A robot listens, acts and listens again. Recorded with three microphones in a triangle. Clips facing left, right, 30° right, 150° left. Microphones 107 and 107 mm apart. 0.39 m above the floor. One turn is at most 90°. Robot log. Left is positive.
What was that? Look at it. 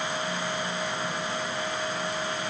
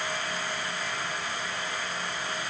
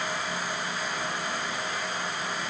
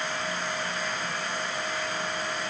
cmd idle
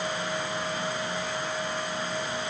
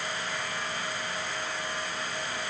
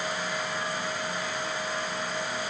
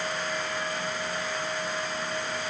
cmd idle
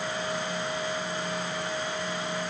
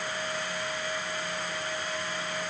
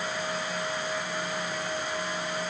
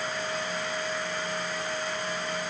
end: I can't make out anything.